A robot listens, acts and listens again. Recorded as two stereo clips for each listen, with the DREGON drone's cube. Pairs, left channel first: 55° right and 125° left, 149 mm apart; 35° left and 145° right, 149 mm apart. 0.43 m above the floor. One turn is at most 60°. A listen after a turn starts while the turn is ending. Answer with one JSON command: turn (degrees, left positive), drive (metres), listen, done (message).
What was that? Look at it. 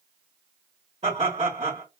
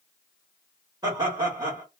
{"turn": 60}
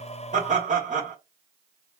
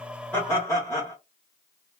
{"turn": 60}
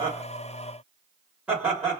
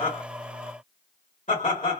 {"turn": 45}
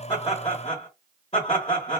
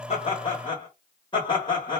{"turn": -20}
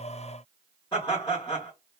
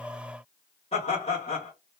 {"done": "Facing the laughter, 1 to 2 m away."}